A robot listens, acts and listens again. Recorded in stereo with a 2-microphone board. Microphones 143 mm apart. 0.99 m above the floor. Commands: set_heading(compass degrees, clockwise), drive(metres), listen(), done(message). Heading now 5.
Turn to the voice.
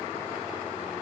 listen()
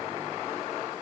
listen()
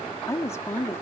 set_heading(345)
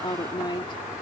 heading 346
set_heading(311)
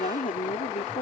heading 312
set_heading(192)
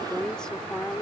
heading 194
done("Facing the woman speaking.")